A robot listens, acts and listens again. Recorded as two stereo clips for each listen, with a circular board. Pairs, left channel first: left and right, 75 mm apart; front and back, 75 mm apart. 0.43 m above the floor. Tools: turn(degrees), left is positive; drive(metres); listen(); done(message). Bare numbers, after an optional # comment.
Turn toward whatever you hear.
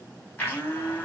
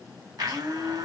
# The blender: 155° left.
turn(155)
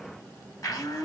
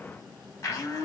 # The blender is now 50° left.
turn(50)
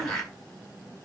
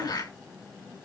done("Found it: a blender, straight ahead, 2 to 4 m away.")